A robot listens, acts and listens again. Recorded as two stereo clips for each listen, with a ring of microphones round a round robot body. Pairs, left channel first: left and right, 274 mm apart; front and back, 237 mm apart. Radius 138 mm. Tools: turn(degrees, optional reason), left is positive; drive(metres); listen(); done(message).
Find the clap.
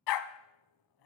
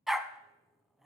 listen()
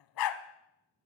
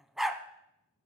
listen()
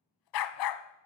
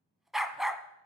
done("I can't make out a clap to turn to.")